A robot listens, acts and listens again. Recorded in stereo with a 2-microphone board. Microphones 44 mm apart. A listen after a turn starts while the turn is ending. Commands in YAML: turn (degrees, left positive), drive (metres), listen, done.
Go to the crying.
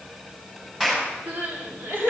turn: -50
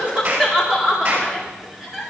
drive: 1.0
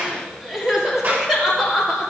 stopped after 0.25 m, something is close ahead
done: "Something is in my way. I am facing the crying but have not reached it."